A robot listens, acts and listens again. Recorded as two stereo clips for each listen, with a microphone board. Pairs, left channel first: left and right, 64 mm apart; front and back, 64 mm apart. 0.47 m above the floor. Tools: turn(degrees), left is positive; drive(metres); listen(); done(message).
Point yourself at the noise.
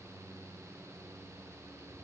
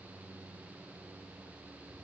listen()
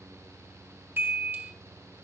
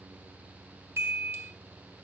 turn(degrees=-145)
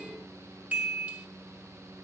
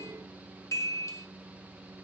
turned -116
turn(degrees=-30)
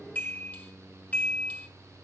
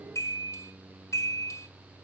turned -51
turn(degrees=25)
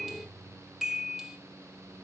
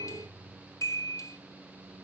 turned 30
done("Found it: a chime, straight ahead, 1 to 2 m away.")